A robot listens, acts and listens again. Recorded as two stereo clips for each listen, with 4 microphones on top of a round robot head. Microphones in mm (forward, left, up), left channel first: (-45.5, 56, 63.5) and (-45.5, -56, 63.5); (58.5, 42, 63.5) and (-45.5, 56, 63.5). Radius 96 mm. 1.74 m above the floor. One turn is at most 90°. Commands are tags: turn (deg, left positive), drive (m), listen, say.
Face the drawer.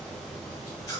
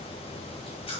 <listen/>
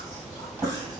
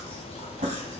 <turn deg="-90"/>
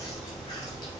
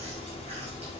<turn deg="-70"/>
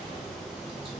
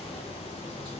<listen/>
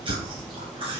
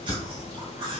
<turn deg="45"/>
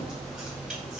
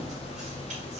<listen/>
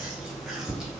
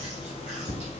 <say>Found it: a drawer, straight ahead, 1 to 2 m away.</say>